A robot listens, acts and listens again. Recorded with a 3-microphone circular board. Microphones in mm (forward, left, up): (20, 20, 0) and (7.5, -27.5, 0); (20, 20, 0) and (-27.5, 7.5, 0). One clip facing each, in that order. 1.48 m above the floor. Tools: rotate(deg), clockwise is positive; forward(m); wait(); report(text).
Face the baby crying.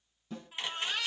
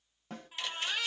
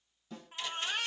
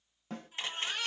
rotate(15)
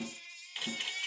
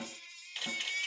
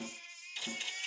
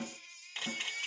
report("Found it: a baby crying, straight ahead.")